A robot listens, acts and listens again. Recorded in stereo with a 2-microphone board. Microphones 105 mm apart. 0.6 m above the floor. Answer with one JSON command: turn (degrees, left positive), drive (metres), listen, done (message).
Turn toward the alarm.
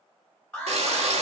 {"turn": 20}
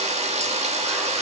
{"listen": true}
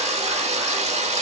{"listen": true}
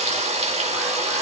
{"done": "I heard an alarm, but can't make it out now. It was about straight ahead or 140° left."}